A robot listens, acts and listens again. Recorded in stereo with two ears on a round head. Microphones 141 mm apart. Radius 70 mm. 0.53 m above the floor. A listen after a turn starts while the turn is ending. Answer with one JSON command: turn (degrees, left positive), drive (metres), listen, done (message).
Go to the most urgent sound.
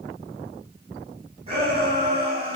{"turn": -40}
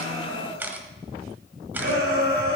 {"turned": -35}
{"turn": -105}
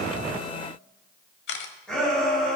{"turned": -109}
{"drive": 1.0}
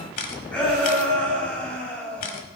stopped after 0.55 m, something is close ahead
{"turn": 10}
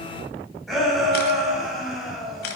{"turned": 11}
{"done": "Blocked. The shout is further on, straight ahead."}